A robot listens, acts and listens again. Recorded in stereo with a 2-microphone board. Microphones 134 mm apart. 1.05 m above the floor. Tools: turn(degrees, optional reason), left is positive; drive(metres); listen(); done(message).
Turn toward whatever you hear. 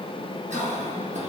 turn(degrees=-60, reason="The cough: about 60° right or 120° right.")
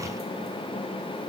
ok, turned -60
listen()
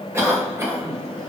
turn(degrees=-25, reason="So it is at 25° right.")
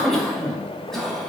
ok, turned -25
done("Facing the cough.")